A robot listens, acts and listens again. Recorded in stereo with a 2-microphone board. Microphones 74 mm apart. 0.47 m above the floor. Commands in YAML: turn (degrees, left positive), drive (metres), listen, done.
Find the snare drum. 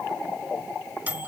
listen: true
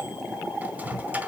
listen: true
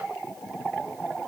done: "I can't make out a snare drum, only a microwave."